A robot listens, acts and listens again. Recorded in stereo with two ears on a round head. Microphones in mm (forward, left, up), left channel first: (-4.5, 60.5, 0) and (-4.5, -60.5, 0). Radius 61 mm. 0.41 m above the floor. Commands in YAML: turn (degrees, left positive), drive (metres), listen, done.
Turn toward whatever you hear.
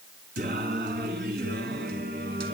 turn: -90
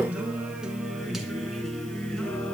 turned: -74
done: "Facing the singing."